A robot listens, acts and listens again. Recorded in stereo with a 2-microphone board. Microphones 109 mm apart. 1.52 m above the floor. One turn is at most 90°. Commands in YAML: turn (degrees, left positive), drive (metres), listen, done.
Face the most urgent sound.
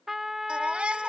turn: -30
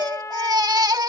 turn: -90
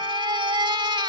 turn: -50
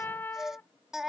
done: "Facing the baby crying."